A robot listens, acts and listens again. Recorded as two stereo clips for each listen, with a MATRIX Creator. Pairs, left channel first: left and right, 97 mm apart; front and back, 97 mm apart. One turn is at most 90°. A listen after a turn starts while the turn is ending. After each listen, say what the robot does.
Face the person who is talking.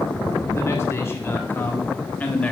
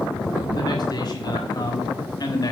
Turn 20° left.
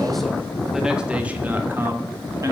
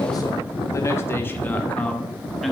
Turn 90° right.
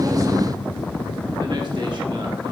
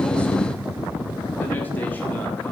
Keep listening.
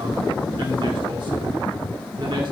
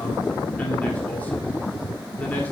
Keep listening.
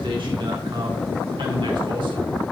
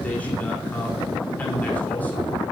Turn 70° right.
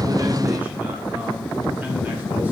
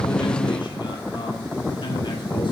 Keep listening.
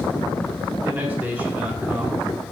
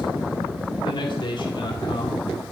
Turn 20° right.
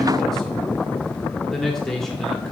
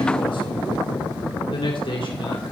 Facing the man speaking, 1 to 2 m away.